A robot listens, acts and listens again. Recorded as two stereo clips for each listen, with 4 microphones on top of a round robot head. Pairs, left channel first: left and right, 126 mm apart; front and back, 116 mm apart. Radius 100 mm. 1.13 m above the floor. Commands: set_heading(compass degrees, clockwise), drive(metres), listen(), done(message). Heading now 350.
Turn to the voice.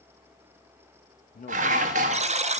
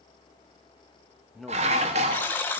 set_heading(260)
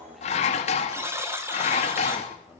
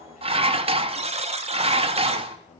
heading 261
done("Facing the man speaking, 2 to 4 m away.")